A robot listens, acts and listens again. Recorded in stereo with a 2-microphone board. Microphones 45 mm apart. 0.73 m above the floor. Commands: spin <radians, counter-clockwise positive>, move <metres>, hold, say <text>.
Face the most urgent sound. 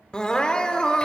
spin 0.35
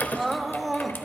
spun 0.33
say Facing the crying, under 1 m away.